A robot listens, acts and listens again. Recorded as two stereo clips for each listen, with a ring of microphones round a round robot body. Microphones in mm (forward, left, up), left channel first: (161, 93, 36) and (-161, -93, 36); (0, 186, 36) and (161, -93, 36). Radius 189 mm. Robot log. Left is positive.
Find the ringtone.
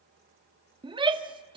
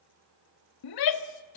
cmd idle
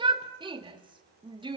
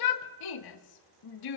cmd idle
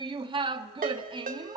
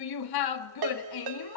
note: The ringtone: 80° right.
cmd yaw -80
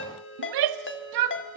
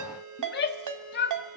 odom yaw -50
note: The ringtone is now 30° right.
cmd yaw -30
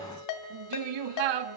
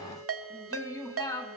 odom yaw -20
note: The ringtone is now 10° right.
cmd yaw -10
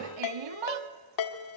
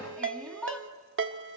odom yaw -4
end: Facing the ringtone, 2 to 4 m away.